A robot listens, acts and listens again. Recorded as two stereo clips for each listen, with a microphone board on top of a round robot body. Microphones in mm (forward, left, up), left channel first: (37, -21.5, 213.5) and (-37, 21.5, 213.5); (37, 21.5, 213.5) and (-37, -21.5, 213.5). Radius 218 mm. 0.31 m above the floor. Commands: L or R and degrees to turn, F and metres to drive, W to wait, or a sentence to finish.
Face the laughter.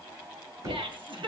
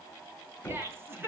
L145
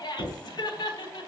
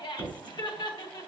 Found it: laughter, straight ahead, 2 to 4 m away.